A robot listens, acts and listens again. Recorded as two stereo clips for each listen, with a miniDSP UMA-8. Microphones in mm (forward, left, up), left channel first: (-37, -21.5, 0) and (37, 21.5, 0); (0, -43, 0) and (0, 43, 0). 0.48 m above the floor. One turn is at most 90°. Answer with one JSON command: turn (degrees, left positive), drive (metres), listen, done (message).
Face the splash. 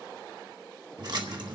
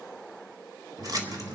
{"turn": 55}
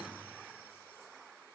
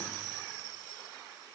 {"done": "I heard a splash from this way, but can't make it out now."}